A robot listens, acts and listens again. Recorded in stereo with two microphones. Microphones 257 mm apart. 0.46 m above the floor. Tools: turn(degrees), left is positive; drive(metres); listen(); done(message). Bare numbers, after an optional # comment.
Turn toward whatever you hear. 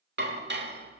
# The dishes clattering: about 45° right or 135° right.
turn(-45)
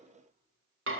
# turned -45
# So it is at 80° right.
turn(-80)
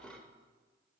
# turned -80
done("Facing the dishes clattering.")